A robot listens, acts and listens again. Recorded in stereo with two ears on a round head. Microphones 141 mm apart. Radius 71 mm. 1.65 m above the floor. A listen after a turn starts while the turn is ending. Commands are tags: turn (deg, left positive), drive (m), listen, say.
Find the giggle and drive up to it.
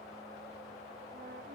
<listen/>
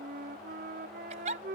<turn deg="-50"/>
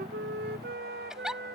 <drive m="1.0"/>
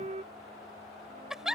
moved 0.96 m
<drive m="1.0"/>
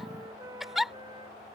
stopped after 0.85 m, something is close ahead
<say>I am next to the giggle.</say>